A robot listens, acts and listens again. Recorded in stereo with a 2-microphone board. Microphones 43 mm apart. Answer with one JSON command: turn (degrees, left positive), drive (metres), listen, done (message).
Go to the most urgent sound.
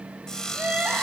{"turn": -35}
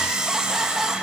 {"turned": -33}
{"drive": 1.0}
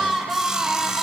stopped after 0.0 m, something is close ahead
{"done": "Blocked. The crying is further on, straight ahead."}